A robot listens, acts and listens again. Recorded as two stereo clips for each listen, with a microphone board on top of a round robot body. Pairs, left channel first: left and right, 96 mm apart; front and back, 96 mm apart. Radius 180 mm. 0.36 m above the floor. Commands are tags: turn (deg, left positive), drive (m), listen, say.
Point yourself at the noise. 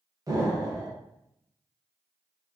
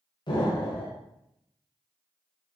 <turn deg="-35"/>
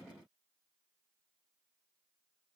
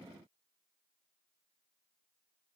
<say>Facing where the explosion came from. I can't hear it now.</say>